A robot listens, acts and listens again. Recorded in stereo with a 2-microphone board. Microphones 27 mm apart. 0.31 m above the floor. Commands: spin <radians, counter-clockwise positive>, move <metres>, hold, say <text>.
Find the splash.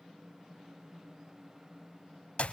hold
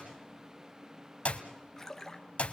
spin 0.52
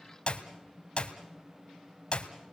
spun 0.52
hold
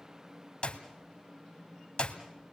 say I heard a splash, but can't make it out now. It was about 15° right or 135° left.